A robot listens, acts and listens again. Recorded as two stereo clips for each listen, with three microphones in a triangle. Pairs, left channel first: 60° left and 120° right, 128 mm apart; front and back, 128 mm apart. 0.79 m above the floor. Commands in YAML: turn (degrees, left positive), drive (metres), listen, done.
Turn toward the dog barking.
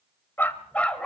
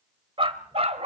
turn: 145
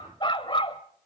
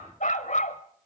turn: 15
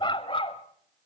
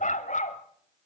turn: 15
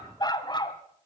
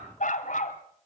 done: "Facing the dog barking, 2 to 4 m away."